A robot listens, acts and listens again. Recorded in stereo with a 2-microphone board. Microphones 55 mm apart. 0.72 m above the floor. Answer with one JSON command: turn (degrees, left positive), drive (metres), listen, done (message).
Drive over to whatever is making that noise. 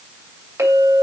{"turn": -70}
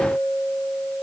{"drive": 1.0}
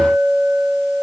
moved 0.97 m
{"drive": 1.0}
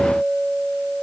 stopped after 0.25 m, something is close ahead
{"done": "Arrived at the clink, straight ahead."}